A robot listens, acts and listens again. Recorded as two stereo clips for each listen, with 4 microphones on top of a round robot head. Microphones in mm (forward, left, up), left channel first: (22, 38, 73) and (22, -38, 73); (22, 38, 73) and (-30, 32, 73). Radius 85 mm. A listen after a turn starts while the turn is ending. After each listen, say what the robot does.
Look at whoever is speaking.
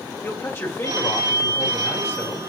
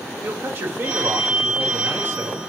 Turn 145° left.
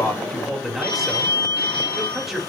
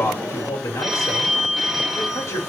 Found it: a man speaking, straight ahead, 2 to 4 m away.